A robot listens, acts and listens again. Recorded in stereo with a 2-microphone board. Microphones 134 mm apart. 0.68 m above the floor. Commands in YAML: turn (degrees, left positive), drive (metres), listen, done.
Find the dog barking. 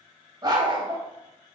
turn: -40
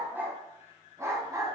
turn: -25
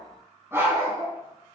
turn: -20
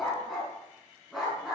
done: "Facing the dog barking."